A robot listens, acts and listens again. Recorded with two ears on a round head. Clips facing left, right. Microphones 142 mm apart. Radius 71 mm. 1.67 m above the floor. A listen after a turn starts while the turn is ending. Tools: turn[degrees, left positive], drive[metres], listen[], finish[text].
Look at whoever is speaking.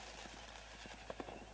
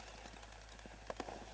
Action: listen[]
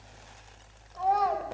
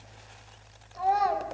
Action: turn[-30]
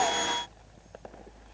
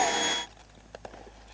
Action: listen[]
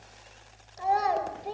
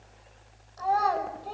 Thought: So it is at 25° left.
Action: turn[25]
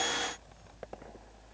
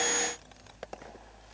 Action: listen[]
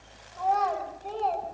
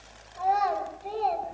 Thought: The child speaking is now 10° right.
Action: turn[-10]
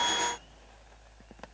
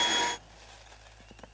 Action: listen[]
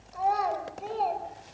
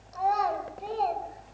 Action: finish[Found it: a child speaking, straight ahead, over 4 m away.]